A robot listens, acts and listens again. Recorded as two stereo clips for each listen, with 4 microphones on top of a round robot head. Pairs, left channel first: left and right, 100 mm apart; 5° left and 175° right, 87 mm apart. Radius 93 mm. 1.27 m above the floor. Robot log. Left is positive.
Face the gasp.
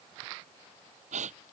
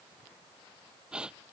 note: The gasp: 90° right.
cmd yaw -90
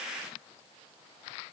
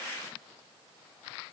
end: Facing where the gasp came from. I can't hear it now.